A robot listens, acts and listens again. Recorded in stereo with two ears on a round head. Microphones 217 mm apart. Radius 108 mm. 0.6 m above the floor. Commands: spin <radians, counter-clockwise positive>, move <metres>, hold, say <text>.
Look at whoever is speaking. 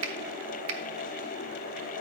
hold
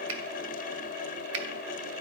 hold
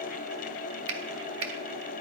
say I can't make out anyone speaking, only a finger snap.